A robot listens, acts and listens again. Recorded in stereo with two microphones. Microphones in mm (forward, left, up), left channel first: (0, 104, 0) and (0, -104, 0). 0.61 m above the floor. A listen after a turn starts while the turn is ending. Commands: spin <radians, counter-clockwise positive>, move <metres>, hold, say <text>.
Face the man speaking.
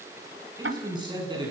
spin -0.35
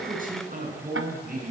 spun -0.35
spin -2.36
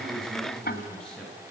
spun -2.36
say Found it: a man speaking, straight ahead, over 4 m away.